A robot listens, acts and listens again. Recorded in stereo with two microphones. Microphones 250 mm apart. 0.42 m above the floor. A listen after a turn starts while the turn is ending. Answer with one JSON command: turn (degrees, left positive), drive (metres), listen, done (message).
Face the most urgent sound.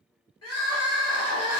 {"turn": 90}
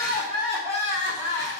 {"turn": -10}
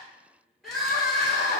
{"done": "Found it: crying, straight ahead, 1 to 2 m away."}